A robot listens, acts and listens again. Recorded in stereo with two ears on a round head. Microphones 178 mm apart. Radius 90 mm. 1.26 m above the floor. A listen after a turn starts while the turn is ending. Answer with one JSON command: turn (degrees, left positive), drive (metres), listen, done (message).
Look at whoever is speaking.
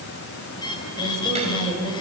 {"turn": -35}
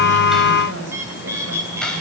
{"turn": -115}
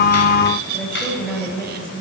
{"done": "Facing the woman speaking, over 4 m away."}